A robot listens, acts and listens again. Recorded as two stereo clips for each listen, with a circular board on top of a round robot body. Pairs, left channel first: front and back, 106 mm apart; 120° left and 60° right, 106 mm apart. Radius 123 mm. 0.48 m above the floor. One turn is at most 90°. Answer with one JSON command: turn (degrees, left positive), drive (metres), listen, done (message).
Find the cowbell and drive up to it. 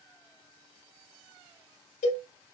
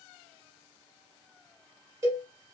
{"drive": 1.0}
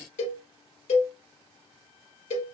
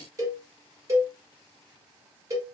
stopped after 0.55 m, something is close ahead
{"done": "Blocked. The cowbell is further on, straight ahead."}